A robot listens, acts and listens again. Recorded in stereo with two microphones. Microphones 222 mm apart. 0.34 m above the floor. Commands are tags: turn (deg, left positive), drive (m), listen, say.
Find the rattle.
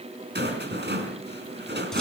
<turn deg="-50"/>
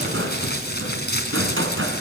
<turn deg="-75"/>
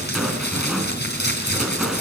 <say>Found it: a rattle, straight ahead.</say>